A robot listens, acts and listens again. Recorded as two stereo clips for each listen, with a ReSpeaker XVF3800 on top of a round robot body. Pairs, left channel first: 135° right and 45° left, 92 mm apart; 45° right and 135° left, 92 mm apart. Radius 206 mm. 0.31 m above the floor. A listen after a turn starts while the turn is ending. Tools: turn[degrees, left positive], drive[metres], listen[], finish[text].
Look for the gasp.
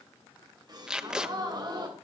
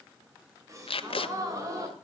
Thought: The gasp: 85° left.
Action: turn[85]
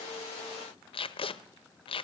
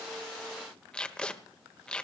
Action: finish[Facing where the gasp came from. I can't hear it now.]